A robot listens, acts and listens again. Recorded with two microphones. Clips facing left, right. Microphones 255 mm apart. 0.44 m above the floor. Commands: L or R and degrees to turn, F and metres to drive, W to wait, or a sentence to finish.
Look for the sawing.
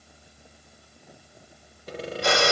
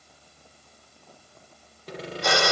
L30
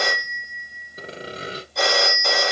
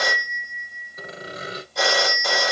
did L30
L145
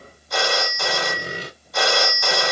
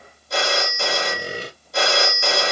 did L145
Facing the sawing.